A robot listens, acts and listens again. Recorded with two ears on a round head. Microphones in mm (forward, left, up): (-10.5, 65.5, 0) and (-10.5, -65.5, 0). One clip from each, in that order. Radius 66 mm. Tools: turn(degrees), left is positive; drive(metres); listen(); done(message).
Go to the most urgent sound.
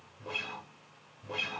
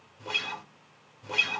listen()
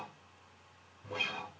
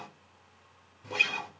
listen()
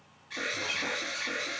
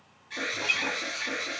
turn(degrees=30)
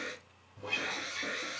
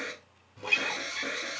turn(degrees=-20)
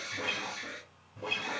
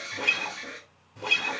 drive(metres=1.0)
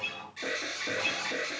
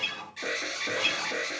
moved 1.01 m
drive(metres=1.0)
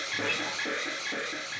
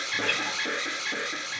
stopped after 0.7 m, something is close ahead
turn(degrees=-15)
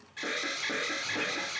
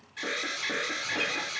done("Arrived at the alarm, straight ahead.")